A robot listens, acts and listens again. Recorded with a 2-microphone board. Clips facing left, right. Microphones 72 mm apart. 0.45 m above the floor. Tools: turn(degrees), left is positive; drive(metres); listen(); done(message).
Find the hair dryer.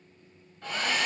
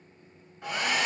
turn(degrees=-30)
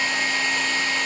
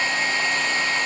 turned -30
turn(degrees=-135)
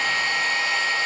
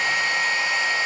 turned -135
turn(degrees=-15)
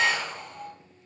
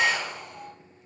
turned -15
done("Facing the hair dryer.")